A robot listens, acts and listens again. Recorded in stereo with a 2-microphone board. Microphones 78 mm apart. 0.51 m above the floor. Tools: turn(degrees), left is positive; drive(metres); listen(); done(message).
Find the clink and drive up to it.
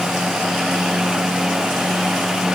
listen()
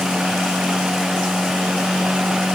listen()
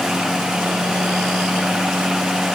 done("I can't make out a clink to turn to.")